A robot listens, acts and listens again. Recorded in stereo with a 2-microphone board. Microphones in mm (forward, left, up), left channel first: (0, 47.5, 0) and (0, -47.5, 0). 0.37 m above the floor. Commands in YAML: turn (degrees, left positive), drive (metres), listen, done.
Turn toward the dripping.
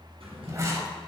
listen: true
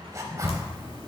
turn: 90
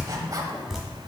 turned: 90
done: "Found it: dripping, straight ahead, 1 to 2 m away."